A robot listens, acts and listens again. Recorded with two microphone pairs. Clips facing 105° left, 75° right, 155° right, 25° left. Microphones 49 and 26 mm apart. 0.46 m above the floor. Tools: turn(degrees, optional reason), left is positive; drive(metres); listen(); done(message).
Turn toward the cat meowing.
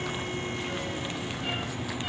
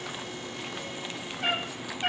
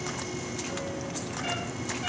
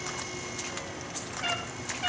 turn(degrees=-40, reason="The cat meowing: 40° right.")
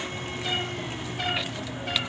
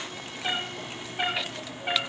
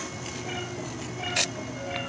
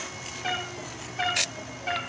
done("Found it: a cat meowing, straight ahead, over 4 m away.")